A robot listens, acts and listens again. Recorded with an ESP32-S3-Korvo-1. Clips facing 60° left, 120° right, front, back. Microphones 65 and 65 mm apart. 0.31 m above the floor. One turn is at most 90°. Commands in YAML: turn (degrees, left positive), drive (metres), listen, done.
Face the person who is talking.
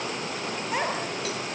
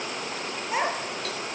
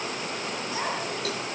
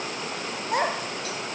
turn: 90
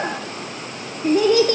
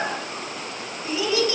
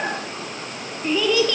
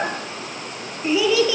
turn: 90
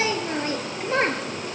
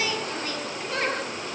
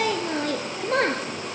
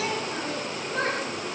done: "Found it: a child speaking, straight ahead."